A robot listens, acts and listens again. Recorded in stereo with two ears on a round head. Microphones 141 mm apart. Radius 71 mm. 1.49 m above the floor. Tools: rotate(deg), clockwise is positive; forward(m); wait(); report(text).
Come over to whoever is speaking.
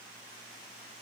wait()
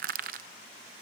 wait()
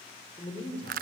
rotate(-40)
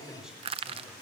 forward(1.0)
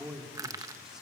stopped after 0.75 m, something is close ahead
report("Something is in my way. I am facing the man speaking but have not reached it.")